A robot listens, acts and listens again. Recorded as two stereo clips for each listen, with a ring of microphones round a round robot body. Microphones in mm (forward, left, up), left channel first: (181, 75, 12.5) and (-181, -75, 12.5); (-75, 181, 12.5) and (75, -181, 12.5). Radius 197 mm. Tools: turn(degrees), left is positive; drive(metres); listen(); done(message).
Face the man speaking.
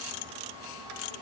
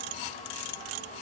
listen()
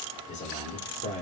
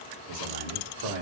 turn(degrees=-50)
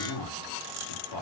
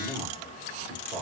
done("Found it: a man speaking, straight ahead.")